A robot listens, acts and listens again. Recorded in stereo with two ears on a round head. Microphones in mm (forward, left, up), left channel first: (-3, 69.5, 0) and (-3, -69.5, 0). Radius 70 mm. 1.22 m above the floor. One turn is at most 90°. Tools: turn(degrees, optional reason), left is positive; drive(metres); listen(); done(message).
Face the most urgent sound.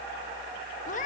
listen()
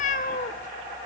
listen()
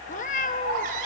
turn(degrees=-60, reason="The baby crying: about 60° right or 120° right.")
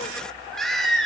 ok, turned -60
done("Found it: a baby crying, straight ahead.")